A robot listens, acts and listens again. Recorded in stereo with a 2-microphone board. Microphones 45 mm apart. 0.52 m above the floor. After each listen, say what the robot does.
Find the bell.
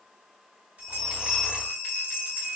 Turn 35° right.
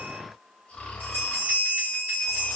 Turn 105° right.
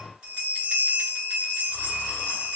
Turn 35° right.
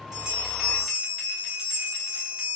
Turn 10° right.
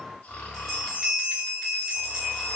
Found it: a bell, straight ahead.